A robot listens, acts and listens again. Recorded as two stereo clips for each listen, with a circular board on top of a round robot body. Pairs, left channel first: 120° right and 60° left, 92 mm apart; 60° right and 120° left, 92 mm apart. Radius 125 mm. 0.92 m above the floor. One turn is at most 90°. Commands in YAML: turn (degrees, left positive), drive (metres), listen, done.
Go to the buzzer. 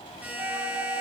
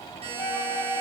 turn: 90
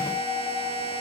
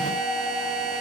turn: 45
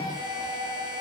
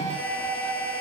listen: true
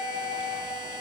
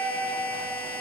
turn: 15
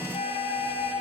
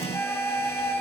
listen: true
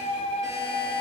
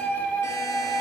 listen: true
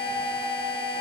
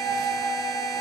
done: "I heard a buzzer from this way, but can't make it out now. I did not reach it."